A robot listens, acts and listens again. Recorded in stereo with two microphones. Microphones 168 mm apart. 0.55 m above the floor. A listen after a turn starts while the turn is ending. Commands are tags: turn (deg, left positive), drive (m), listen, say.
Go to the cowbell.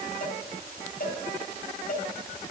<turn deg="65"/>
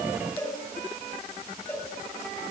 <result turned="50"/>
<turn deg="15"/>
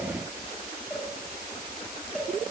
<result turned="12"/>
<drive m="1.0"/>
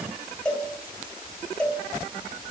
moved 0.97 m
<drive m="1.0"/>
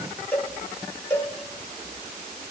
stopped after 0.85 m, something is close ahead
<turn deg="10"/>
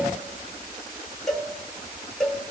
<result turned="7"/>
<say>I am next to the cowbell.</say>